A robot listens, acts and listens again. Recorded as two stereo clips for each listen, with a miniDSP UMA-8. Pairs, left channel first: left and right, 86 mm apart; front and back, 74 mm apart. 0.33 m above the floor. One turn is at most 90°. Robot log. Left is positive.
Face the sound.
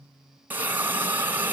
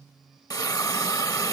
note: The hiss: 25° right.
cmd yaw -25
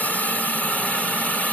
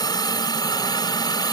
note: The hiss is now 15° left.
cmd yaw +15
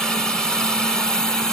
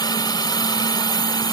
end: Facing the hiss, 1 to 2 m away.